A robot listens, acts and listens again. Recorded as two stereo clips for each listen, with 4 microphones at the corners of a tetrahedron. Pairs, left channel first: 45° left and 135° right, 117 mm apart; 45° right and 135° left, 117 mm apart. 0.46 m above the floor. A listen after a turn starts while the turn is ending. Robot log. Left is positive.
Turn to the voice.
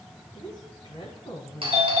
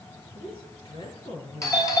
end: Facing the woman speaking.